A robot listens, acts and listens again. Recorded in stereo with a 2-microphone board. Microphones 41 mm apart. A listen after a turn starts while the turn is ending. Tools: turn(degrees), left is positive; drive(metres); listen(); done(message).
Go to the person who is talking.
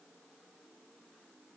listen()
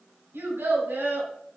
turn(degrees=-90)
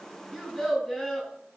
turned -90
drive(metres=1.0)
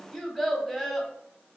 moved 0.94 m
drive(metres=1.0)
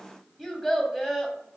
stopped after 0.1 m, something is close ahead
done("I am next to the child speaking.")